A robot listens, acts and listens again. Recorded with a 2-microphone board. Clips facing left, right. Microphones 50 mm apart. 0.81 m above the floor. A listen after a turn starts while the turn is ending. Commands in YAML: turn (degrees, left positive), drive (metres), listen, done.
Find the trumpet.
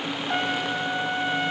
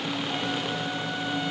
turn: 45
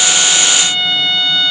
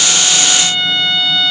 done: "Facing the trumpet, 1 to 2 m away."